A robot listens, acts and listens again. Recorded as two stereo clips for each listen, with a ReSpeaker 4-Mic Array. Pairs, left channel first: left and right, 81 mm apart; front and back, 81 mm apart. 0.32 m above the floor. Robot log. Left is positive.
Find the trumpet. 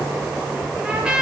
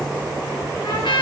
note: The trumpet: 10° right.
cmd yaw -10
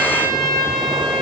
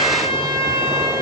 end: Found it: a trumpet, straight ahead, over 4 m away.